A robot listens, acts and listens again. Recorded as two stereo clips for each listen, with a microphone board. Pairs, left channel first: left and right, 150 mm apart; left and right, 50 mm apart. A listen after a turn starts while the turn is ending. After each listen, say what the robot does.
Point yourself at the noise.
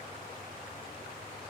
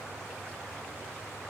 Keep listening.
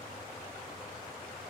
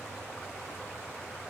Keep listening.
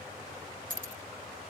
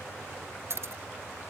Turn 60° right.
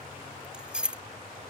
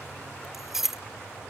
Found it: keys jangling, straight ahead.